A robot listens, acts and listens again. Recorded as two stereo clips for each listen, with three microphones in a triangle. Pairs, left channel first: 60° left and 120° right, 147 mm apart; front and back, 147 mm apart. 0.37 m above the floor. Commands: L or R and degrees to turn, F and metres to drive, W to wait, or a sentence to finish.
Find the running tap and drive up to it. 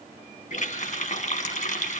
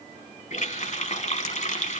L30
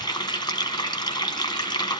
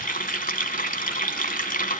F1.0
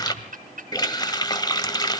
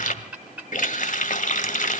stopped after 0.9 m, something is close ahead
Arrived at the running tap, straight ahead.